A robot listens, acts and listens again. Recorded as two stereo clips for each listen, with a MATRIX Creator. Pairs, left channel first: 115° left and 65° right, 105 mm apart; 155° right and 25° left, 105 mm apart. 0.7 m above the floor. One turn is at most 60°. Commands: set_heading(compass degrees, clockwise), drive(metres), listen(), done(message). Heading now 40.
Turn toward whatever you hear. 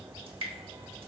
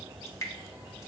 set_heading(100)
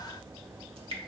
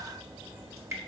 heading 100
set_heading(140)
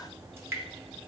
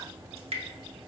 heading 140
done("Found it: dripping, straight ahead, under 1 m away.")